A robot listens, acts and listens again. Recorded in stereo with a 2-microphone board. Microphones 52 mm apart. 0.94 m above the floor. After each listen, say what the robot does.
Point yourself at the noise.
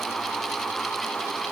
Keep listening.
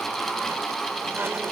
Keep listening.
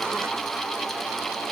I can't make out anything to turn to.